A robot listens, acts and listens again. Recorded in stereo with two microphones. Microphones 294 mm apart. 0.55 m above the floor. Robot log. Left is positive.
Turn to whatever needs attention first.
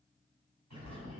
cmd idle
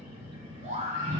note: The scream: about 25° right or 155° right.
cmd yaw -25
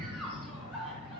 end: Found it: a scream, straight ahead, 2 to 4 m away.